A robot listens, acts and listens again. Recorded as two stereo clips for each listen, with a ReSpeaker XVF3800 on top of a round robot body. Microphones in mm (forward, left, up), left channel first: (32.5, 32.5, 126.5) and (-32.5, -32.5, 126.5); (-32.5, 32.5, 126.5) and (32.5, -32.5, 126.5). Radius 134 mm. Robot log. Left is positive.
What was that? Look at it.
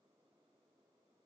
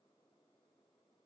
cmd idle
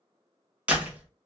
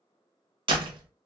note: The door slam: 60° right.
cmd yaw -60
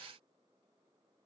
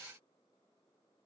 end: Facing where the door slam came from. I can't hear it now.